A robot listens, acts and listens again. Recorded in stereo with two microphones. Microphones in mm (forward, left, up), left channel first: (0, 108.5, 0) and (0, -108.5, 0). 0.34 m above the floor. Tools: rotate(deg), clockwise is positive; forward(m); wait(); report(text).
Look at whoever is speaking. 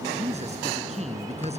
rotate(30)
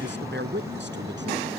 rotate(120)
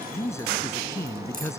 rotate(-15)
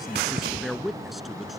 report("Found it: a man speaking, straight ahead.")